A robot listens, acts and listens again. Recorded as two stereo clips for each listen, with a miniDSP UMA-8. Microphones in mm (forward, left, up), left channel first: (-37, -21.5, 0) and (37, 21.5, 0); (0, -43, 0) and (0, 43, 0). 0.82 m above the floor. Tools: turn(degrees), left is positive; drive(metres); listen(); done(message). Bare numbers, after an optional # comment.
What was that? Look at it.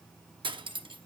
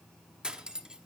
# The cutlery clinking: 10° left.
turn(10)
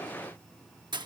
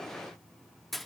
done("Found it: cutlery clinking, straight ahead.")